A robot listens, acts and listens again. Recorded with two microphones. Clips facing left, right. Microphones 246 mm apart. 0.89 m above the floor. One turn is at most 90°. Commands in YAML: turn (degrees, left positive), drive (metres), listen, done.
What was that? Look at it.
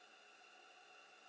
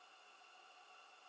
listen: true
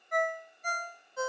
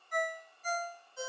turn: 65
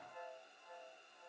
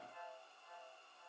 turn: 50
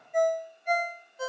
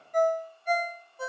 done: "Facing the ringtone, under 1 m away."